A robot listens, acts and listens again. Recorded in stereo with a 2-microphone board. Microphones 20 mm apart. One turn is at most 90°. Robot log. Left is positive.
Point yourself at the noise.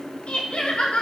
note: The laughter: about 70° left or 110° left.
cmd yaw +70
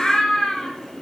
note: So it is at 35° left.
cmd yaw +35
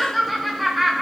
end: Facing the laughter.